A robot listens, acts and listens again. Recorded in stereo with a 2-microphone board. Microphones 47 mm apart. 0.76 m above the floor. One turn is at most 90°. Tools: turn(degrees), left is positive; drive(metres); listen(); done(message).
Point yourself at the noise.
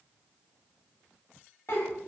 turn(degrees=55)
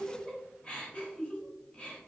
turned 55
turn(degrees=30)
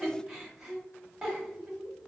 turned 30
turn(degrees=-10)
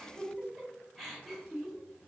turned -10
done("Facing the giggle, under 1 m away.")